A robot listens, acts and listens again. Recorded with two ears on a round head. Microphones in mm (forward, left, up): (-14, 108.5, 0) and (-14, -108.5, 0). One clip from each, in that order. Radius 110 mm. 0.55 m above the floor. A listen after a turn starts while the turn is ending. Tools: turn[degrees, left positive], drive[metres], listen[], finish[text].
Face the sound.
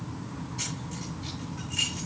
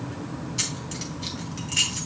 Thought: The keys jangling: about 50° right or 130° right.
Action: turn[-50]
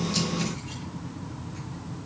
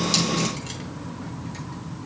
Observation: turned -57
Action: listen[]
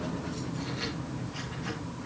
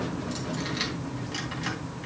Thought: So it is at 75° right.
Action: turn[-75]
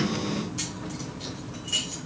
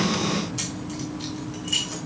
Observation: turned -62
Thought: The keys jangling is now 10° right.
Action: turn[-10]
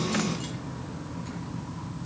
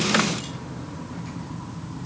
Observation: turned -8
Action: listen[]
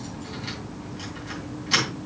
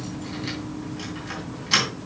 Action: finish[Found it: keys jangling, straight ahead.]